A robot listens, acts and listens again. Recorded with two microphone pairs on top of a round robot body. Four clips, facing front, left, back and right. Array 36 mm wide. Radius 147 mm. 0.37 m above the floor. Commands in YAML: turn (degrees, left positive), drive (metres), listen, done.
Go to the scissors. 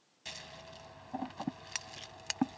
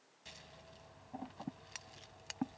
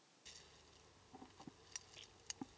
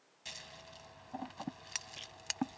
turn: -25
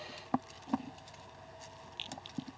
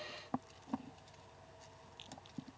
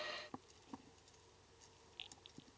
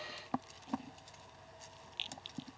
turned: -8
turn: -20
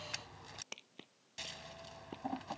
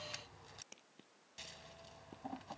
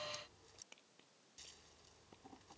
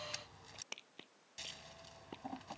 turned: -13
drive: 1.0
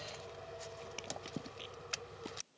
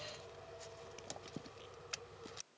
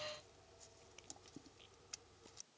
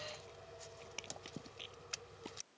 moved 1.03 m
drive: 1.0
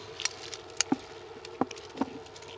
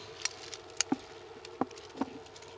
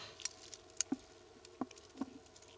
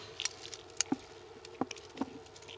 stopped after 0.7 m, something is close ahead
turn: 15
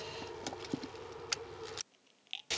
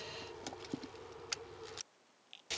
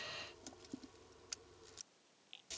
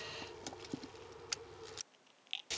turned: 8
done: "Arrived at the scissors, straight ahead."